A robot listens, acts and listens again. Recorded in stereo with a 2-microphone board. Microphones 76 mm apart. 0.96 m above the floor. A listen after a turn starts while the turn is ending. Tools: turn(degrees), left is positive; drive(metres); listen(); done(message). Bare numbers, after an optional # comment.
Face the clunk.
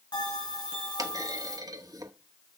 # The clunk: about 50° right or 130° right.
turn(-50)
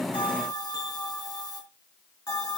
listen()
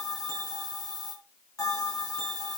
done("I heard a clunk, but can't make it out now. It was about straight ahead or 80° right.")